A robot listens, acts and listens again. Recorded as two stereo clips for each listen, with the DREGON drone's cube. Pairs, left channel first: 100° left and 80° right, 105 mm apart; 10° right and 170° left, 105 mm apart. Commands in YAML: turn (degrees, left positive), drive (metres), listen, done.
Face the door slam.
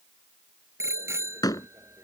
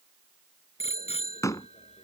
turn: 50
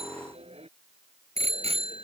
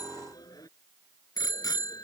done: "I heard a door slam from this way, but can't make it out now."